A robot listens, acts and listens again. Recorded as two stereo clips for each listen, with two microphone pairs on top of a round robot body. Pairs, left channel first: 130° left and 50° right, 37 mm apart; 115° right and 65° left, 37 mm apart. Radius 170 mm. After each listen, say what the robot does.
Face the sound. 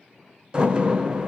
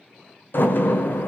Turn 115° right.
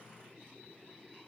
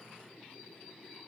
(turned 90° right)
Turn 25° right.
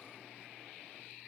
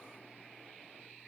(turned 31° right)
I heard a door slam from this way, but can't make it out now.